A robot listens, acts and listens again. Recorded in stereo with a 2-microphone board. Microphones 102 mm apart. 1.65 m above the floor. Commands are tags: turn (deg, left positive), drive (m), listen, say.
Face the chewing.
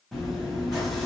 <turn deg="30"/>
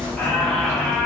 <turn deg="-25"/>
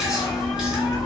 <say>Found it: chewing, straight ahead, 1 to 2 m away.</say>